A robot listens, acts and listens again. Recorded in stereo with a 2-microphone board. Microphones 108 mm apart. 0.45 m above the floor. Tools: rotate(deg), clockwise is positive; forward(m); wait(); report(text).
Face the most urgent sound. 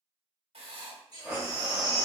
rotate(40)
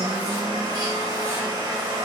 wait()
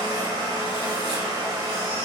wait()
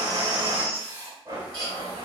rotate(100)
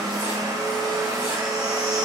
wait()
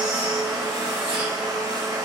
wait()
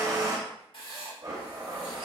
report("I heard a baby crying from this way, but can't make it out now.")